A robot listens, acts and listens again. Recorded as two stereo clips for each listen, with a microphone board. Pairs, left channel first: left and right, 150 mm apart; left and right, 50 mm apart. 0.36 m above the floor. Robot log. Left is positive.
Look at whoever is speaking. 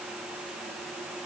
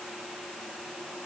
cmd idle
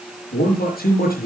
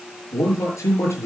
cmd yaw +90
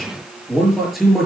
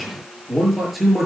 end: Found it: a man speaking, straight ahead.